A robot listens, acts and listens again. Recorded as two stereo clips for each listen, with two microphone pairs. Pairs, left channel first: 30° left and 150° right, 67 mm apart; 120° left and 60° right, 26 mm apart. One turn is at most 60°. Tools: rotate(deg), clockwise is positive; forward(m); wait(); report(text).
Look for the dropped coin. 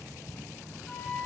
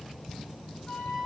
wait()
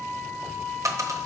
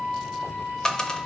rotate(-60)
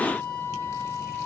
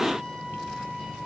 rotate(-60)
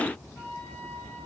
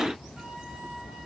rotate(-55)
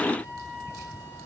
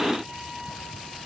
report("Facing where the dropped coin came from. I can't hear it now.")